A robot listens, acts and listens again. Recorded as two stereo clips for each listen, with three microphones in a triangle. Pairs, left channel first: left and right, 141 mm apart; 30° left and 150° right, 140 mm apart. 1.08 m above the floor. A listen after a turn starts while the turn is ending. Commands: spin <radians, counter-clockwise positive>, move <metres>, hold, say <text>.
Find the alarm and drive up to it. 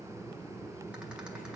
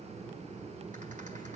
hold
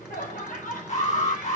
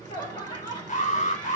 spin 1.05
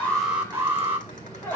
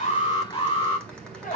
spin -0.26
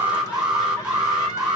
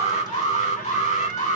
move 1.0
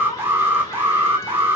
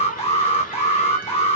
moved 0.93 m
spin -0.26
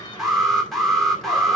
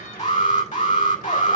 move 1.0
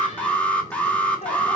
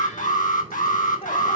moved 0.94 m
spin 0.17
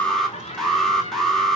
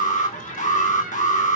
move 1.0
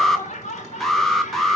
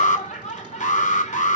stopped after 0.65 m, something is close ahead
say Arrived at the alarm, straight ahead.